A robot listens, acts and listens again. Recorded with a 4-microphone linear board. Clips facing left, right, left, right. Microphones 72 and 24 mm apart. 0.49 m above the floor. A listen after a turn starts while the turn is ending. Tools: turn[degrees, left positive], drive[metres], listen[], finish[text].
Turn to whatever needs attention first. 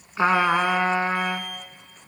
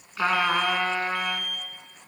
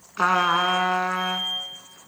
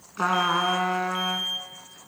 Thought: The alarm: about 60° right or 120° right.
Action: turn[-60]
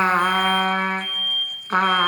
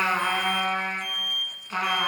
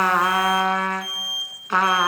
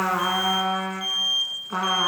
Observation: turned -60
Thought: So it is at 20° right.
Action: turn[-20]
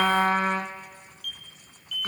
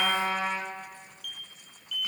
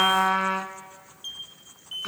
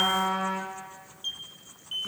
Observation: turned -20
Action: finish[Found it: an alarm, straight ahead.]